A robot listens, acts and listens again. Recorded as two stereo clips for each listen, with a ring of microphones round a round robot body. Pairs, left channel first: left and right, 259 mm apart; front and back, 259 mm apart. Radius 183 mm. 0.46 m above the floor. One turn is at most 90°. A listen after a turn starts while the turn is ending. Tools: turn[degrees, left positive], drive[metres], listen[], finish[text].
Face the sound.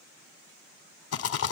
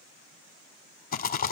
Thought: The rattle: 55° left.
Action: turn[55]
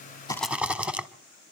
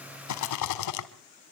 Action: finish[Facing the rattle.]